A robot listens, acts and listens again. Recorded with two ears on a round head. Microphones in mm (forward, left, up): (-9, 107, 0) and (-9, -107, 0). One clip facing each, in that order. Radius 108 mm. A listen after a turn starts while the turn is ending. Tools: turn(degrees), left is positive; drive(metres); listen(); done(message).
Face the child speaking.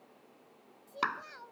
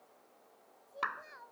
turn(degrees=55)
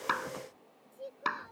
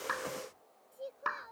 done("Found it: a child speaking, straight ahead.")